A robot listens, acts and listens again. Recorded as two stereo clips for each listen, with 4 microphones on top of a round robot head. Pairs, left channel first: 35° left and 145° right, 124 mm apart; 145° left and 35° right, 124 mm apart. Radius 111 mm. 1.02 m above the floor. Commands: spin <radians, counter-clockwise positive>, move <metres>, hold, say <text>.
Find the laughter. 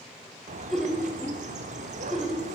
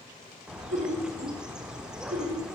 spin -0.96
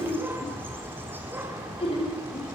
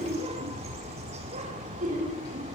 spin -0.26
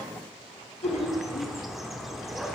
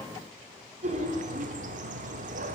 say Facing the laughter.